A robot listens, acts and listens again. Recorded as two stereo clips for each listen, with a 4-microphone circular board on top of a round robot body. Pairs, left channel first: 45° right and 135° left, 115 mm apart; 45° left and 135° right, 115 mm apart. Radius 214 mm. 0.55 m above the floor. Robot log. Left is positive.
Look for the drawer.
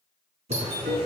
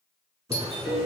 note: The drawer: 160° left.
cmd yaw +160
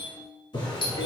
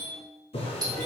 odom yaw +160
end: Facing the drawer, 1 to 2 m away.